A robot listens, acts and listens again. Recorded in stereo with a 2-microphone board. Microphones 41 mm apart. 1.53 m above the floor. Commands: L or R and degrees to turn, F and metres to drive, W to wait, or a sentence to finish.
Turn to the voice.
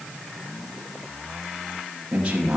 R20
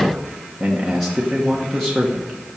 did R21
Found it: a man speaking, straight ahead, 1 to 2 m away.